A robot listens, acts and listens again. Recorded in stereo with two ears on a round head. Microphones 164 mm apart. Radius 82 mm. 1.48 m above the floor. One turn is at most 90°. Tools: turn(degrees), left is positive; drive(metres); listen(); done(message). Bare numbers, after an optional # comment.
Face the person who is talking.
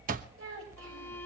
turn(-90)
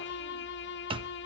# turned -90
listen()
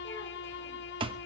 listen()
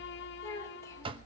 # The child speaking is now 15° left.
turn(15)
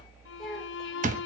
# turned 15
done("Facing the child speaking.")